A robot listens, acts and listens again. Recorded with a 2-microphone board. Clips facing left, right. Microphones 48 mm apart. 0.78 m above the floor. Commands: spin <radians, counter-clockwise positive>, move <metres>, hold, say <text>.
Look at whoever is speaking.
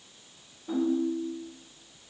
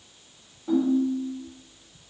hold
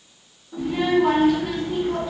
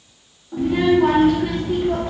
spin -0.96
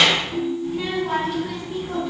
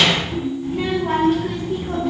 spin -0.96
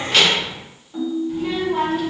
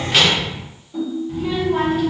say Facing the child speaking, 1 to 2 m away.